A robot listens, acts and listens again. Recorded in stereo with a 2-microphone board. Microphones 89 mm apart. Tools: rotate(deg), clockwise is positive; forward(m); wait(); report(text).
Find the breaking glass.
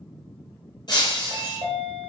rotate(-45)
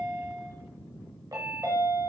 wait()
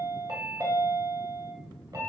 report("I heard breaking glass, but can't make it out now. It was about straight ahead or 90° left.")